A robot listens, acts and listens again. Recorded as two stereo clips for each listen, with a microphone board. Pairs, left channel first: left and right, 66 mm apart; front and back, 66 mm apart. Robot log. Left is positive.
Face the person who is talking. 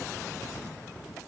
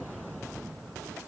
cmd idle
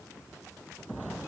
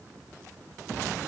cmd idle
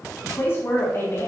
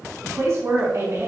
note: The woman speaking: 140° left.
cmd yaw +140
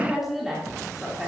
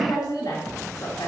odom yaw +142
end: Found it: a woman speaking, straight ahead, 2 to 4 m away.